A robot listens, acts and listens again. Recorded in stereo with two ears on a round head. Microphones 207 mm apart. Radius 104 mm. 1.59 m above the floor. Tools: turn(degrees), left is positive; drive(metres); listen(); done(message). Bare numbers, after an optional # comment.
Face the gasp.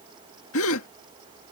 # The gasp: about 60° left or 120° left.
turn(60)
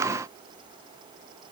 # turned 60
listen()
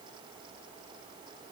done("I heard a gasp, but can't make it out now. It was about straight ahead or 60° left.")